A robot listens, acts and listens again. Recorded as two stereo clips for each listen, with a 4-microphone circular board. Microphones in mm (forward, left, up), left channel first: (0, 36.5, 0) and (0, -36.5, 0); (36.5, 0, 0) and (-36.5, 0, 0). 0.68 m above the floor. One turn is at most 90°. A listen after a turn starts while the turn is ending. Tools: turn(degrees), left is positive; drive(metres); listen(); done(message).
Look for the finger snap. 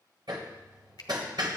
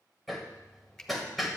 turn(degrees=85)
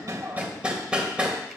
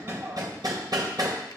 listen()
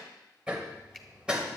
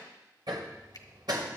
listen()
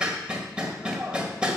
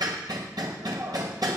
done("I heard a finger snap from this way, but can't make it out now.")